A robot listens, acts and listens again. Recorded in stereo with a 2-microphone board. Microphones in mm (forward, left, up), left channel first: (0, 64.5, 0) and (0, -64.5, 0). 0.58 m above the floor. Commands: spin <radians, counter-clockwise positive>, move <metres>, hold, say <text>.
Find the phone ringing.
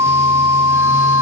hold
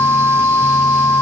hold
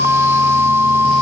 say I can't make out a phone ringing.